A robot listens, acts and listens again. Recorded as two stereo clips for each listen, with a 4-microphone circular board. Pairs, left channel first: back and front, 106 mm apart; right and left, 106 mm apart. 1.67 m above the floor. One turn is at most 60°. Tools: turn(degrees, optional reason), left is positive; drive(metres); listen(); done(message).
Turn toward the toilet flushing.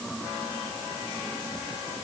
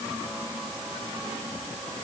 listen()
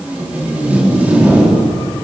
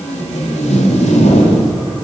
listen()
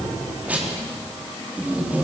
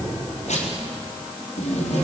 done("I can't make out a toilet flushing, only tape being pulled.")